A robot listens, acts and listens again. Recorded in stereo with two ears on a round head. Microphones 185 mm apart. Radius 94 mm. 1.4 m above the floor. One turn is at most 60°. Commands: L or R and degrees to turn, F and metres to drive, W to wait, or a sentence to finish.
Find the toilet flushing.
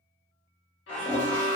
L30
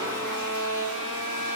W
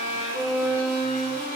W
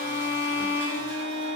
I heard a toilet flushing, but can't make it out now. It was about 25° right or 145° left.